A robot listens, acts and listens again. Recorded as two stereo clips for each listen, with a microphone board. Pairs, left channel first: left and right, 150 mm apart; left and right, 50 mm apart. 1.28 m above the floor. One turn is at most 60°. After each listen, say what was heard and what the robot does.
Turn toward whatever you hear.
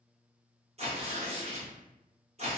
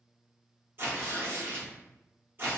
The tearing paper: about 45° right or 135° right. Turn 45° right.
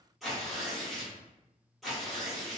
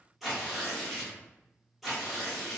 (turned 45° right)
Found it: tearing paper, straight ahead.